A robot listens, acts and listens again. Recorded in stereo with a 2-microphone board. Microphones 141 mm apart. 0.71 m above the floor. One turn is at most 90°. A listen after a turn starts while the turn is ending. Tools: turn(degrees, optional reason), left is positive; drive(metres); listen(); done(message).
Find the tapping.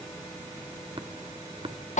turn(degrees=-40, reason="The tapping: about 40° right or 140° right.")
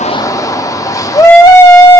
listen()
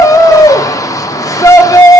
listen()
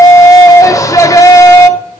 done("I heard tapping, but can't make it out now. It was about straight ahead or 100° right.")